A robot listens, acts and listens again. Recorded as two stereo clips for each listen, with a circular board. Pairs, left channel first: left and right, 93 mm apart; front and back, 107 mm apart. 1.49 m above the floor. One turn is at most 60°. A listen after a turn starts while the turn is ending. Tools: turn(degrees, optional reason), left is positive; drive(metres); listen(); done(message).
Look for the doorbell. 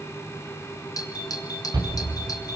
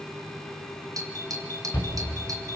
turn(degrees=60, reason="The doorbell: 130° left.")
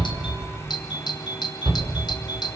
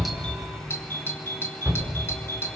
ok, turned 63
turn(degrees=60, reason="The doorbell is now 65° left.")
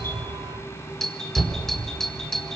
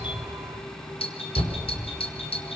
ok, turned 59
done("Facing the doorbell.")